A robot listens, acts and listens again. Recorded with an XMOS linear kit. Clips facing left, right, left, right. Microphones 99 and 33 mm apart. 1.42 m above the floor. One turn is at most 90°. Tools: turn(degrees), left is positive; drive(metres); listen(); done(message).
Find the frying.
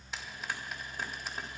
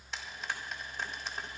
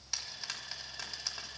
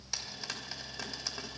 turn(degrees=30)
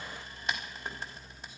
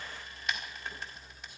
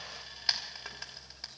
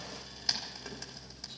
turn(degrees=90)
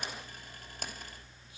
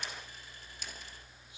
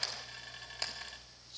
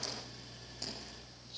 turn(degrees=60)
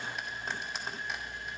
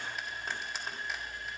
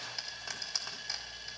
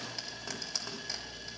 done("Facing the frying, 2 to 4 m away.")